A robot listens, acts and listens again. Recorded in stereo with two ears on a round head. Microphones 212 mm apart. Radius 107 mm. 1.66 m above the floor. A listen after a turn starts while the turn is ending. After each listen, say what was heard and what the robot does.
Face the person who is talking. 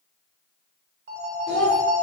Turn 30° left.
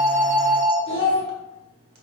So it is at 150° left. Turn 150° left.
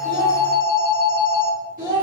The child speaking is now 45° right. Turn 45° right.
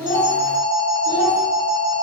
Keep listening.
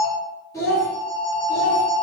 The child speaking is now 15° left. Turn 15° left.
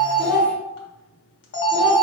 Found it: a child speaking, straight ahead, 1 to 2 m away.